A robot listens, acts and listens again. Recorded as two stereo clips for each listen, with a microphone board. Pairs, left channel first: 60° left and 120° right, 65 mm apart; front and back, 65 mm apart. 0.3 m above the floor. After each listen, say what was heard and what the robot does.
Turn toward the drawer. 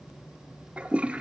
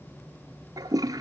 Keep listening.
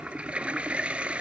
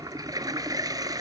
Keep listening.
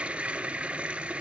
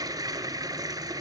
I can't make out a drawer to turn to.